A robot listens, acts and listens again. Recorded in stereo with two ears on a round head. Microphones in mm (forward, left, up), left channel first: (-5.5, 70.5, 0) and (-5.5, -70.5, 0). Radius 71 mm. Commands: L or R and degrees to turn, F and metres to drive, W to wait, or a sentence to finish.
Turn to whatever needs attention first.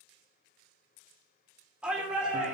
R30
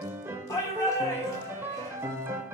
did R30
L25
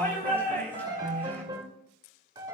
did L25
L15
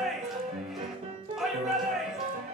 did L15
Found it: a shout, straight ahead.